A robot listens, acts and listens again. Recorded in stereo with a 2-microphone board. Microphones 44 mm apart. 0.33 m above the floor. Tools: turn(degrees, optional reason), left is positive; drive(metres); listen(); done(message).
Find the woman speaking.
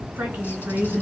turn(degrees=-45, reason="The woman speaking: about 45° right or 135° right.")
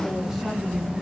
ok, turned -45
listen()
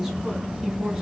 done("Found it: a woman speaking, straight ahead, 2 to 4 m away.")